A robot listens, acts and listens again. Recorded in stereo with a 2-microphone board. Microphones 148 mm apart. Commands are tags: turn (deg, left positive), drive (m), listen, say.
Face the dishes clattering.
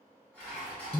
<turn deg="30"/>
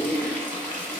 <listen/>
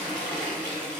<listen/>
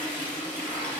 <say>I heard dishes clattering, but can't make it out now. It was about 20° right or 140° left.</say>